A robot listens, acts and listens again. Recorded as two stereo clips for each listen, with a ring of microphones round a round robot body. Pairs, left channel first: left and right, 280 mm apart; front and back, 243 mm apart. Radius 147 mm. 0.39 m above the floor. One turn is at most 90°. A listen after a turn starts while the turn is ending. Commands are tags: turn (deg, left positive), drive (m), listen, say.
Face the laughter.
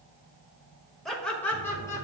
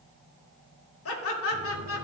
<turn deg="10"/>
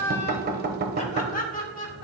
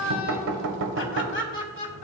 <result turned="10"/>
<turn deg="35"/>
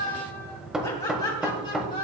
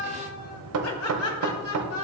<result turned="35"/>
<turn deg="30"/>
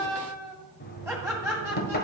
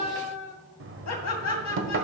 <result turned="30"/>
<say>Facing the laughter, 2 to 4 m away.</say>